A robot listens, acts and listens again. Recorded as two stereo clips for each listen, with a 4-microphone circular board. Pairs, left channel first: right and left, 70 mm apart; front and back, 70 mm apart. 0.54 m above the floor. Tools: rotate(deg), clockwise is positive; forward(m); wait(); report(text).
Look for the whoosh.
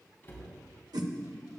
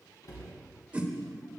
rotate(-105)
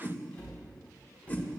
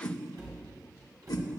rotate(25)
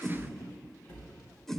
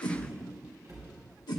report("Found it: a whoosh, straight ahead.")